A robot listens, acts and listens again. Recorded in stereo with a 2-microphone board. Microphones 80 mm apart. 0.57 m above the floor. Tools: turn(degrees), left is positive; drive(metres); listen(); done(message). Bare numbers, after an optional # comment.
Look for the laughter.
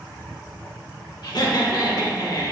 # The laughter: about 50° left or 130° left.
turn(50)
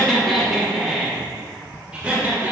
# So it is at 20° right.
turn(-20)
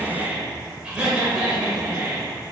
# The laughter is now 20° right.
turn(-20)
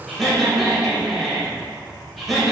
done("Facing the laughter.")